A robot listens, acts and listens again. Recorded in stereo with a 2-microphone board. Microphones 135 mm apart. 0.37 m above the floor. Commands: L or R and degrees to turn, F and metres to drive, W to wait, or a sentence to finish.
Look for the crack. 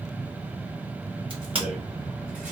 R40
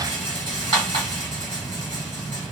W
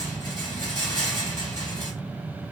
I heard a crack, but can't make it out now. It was about straight ahead or 100° right.